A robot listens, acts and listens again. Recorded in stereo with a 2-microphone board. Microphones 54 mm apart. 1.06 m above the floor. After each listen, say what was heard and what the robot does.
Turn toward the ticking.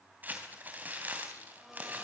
Keep listening.
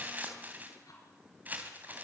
Turn 90° left.
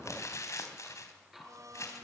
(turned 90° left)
Found it: ticking, straight ahead.